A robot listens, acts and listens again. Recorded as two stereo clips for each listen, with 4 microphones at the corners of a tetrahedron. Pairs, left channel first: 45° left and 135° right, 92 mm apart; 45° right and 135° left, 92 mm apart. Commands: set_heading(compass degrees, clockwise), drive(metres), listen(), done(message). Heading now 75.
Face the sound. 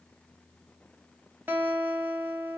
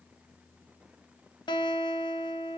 set_heading(145)
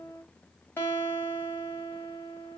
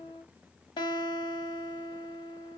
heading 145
set_heading(165)
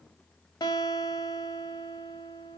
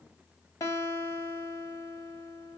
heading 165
done("Found it: a guitar, straight ahead, 1 to 2 m away.")